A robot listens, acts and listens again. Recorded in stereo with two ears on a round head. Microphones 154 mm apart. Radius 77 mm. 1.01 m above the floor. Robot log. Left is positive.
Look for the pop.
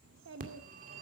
cmd idle
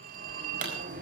note: The pop: about 50° right or 130° right.
cmd yaw -50
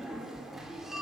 cmd idle
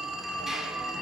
end: I heard a pop, but can't make it out now. It was about straight ahead or 80° right.